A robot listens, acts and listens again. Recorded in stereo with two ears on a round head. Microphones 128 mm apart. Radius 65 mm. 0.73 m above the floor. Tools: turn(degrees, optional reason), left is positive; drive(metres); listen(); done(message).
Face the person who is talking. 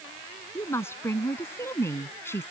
turn(degrees=15, reason="The woman speaking: about 15° left or 165° left.")
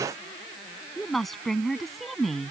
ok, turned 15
turn(degrees=30)
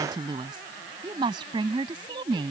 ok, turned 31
turn(degrees=-35, reason="So it is at 35° right.")
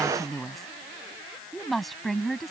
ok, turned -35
done("Found it: a woman speaking, straight ahead.")